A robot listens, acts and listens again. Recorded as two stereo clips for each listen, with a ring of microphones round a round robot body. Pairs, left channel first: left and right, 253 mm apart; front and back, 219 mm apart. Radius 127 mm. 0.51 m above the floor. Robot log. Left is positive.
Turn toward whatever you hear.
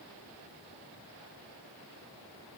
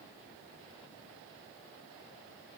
cmd idle
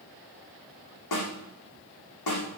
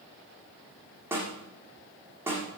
note: The snare drum: 100° left.
cmd yaw +100
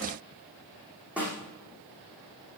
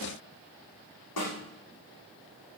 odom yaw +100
end: Found it: a snare drum, straight ahead, over 4 m away.